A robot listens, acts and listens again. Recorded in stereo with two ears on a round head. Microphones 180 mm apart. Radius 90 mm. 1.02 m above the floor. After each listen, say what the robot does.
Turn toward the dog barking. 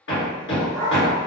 Turn 30° right.
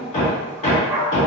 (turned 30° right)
Turn 30° right.
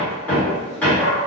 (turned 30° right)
Turn 30° left.
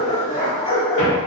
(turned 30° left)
Turn 140° left.
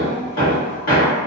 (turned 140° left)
Keep listening.
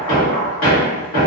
Turn 25° left.
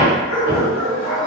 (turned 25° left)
Facing the dog barking.